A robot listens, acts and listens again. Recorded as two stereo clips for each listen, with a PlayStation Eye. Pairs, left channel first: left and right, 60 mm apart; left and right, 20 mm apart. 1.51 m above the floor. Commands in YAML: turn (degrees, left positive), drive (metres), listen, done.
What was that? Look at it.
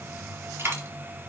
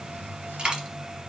turn: -40
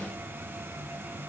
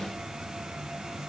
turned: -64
listen: true
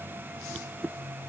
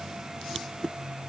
done: "I heard a dropped coin, but can't make it out now. It was about 25° left or 75° right."